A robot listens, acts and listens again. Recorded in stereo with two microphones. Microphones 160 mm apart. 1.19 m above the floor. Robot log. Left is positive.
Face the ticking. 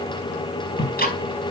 note: The ticking: about 75° left or 105° left.
cmd yaw +75
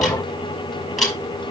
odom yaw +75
end: Facing the ticking.